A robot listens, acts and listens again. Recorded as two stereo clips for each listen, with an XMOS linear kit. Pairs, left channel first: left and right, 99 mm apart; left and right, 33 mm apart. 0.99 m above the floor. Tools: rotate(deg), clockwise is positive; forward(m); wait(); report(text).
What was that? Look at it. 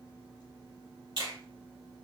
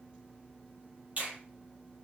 rotate(55)
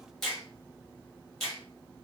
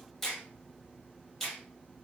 report("Found it: a finger snap, straight ahead.")